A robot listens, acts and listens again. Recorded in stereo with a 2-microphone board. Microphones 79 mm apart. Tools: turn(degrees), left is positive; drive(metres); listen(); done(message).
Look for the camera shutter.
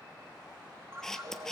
turn(degrees=30)
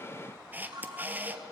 turn(degrees=-25)
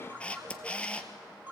turn(degrees=15)
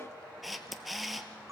done("Facing the camera shutter.")